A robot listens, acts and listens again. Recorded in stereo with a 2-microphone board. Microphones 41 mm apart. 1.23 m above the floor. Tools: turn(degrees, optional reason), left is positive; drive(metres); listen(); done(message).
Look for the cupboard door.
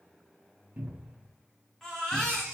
turn(degrees=-40, reason="The cupboard door: about 40° right or 140° right.")
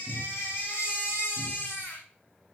listen()
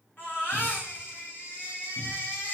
listen()
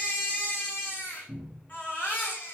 done("Facing the cupboard door, 1 to 2 m away.")